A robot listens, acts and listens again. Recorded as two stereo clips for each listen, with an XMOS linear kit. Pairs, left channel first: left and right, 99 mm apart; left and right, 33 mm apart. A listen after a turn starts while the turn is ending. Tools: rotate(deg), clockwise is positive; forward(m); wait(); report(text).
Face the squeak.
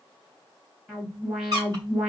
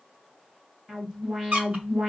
rotate(45)
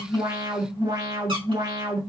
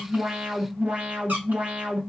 wait()
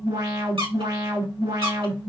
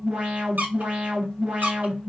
rotate(85)
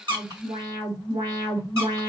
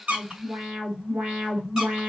wait()
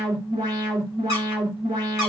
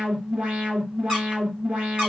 rotate(30)
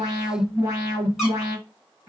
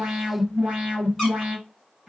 wait()
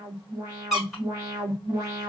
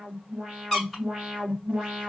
report("Facing the squeak.")